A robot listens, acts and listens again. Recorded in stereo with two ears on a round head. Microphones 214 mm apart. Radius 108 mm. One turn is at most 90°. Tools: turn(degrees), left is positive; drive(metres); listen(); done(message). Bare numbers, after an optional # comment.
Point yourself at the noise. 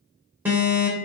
turn(-30)
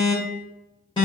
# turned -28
# So it is at 20° left.
turn(20)
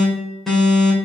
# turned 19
done("Found it: an alarm, straight ahead, 2 to 4 m away.")